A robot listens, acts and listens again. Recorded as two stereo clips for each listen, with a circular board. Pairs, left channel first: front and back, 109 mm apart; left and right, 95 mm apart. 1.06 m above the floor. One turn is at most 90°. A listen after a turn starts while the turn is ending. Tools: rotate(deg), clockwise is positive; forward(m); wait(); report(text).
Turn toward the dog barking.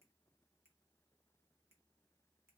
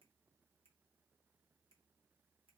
wait()
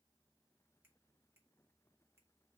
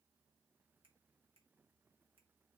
wait()
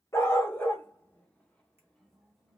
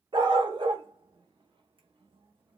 rotate(70)
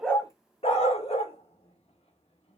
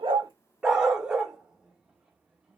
rotate(10)
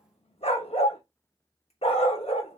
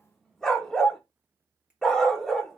report("Found it: a dog barking, straight ahead.")